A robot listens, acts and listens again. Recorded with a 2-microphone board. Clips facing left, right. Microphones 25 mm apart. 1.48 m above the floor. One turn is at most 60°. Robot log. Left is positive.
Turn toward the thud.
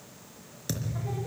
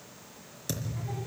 cmd yaw +30
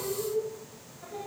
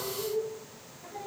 cmd idle
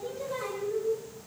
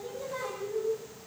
end: I heard a thud, but can't make it out now. It was about 20° right or 140° left.